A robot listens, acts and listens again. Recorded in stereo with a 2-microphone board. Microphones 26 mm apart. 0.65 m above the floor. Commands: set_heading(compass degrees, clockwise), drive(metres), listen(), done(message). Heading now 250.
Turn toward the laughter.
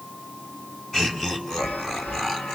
set_heading(235)
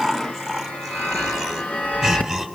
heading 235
set_heading(265)
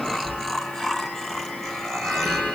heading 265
set_heading(240)
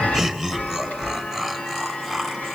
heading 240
done("Found it: laughter, straight ahead, over 4 m away.")